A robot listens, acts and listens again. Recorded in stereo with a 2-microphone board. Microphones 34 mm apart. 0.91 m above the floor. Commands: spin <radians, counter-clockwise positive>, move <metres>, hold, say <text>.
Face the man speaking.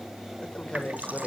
spin 0.52
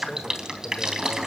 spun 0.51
hold
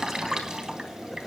hold
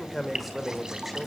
say Facing the man speaking.